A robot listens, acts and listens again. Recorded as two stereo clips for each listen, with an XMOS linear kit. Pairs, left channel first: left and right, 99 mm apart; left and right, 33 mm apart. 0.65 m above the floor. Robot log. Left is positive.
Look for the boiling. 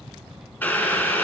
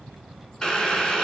note: The boiling: about 20° left or 160° left.
cmd yaw +20
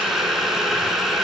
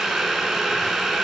end: Facing the boiling, 1 to 2 m away.